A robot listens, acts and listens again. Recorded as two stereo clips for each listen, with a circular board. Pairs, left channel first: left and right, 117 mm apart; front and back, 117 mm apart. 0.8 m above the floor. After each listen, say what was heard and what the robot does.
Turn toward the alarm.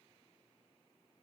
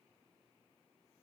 Keep listening.
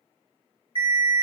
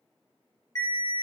The alarm: 55° right. Turn 55° right.
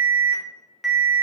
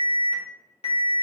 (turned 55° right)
Facing the alarm, 1 to 2 m away.